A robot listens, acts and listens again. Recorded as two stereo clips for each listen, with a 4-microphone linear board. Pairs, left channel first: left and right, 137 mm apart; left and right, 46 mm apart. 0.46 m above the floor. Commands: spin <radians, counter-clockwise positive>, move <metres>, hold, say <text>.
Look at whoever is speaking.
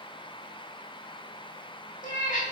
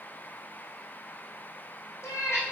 hold
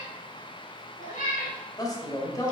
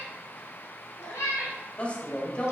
spin 0.44
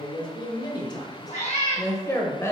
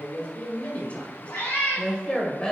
spin 0.35
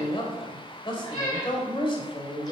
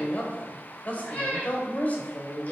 spin 0.70
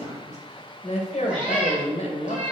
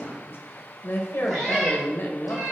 spin 2.09
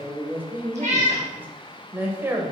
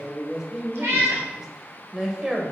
spin -0.26
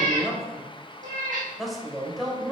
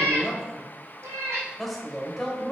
say Facing the man speaking, 2 to 4 m away.